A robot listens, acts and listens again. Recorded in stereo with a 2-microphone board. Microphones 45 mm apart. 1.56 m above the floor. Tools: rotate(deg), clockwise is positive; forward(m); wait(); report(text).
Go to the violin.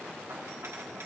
wait()
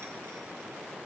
wait()
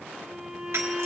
rotate(30)
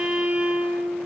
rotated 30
rotate(145)
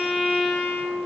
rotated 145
rotate(10)
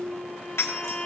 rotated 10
forward(1.0)
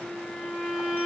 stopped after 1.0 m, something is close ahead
report("Arrived at the violin, straight ahead.")